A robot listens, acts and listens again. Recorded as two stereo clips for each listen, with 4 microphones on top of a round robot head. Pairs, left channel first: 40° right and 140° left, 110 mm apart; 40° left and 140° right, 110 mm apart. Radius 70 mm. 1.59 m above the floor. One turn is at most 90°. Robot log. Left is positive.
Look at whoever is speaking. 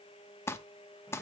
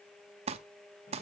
cmd idle
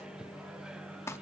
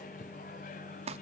cmd idle
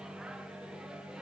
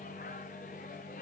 end: I can't make out anyone speaking, only a microwave and crumpling.